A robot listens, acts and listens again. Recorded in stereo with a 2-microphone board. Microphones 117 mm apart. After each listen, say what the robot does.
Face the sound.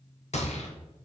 Turn 90° left.
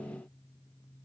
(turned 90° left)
I heard a gunshot from this way, but can't make it out now.